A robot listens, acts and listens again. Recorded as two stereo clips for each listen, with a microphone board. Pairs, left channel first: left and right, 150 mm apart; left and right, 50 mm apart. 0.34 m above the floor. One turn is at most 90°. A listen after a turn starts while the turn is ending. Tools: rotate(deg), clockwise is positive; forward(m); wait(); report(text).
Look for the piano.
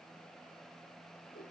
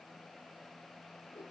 wait()
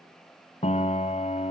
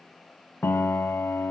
rotate(-50)
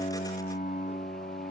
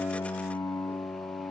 rotate(-80)
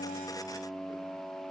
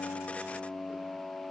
report("Found it: a piano, straight ahead, under 1 m away.")